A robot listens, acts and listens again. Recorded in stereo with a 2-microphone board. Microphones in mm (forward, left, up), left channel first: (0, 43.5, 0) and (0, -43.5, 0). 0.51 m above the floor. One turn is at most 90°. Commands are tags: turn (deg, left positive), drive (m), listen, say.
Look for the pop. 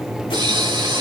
<turn deg="-70"/>
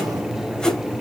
<listen/>
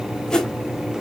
<say>I heard a pop, but can't make it out now. It was about straight ahead or 40° right.</say>